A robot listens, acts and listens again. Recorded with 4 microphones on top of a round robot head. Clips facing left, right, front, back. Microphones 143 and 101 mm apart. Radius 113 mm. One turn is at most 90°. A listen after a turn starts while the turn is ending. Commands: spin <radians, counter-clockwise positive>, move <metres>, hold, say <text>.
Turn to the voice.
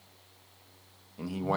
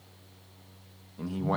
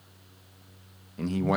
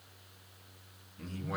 say Facing the man speaking.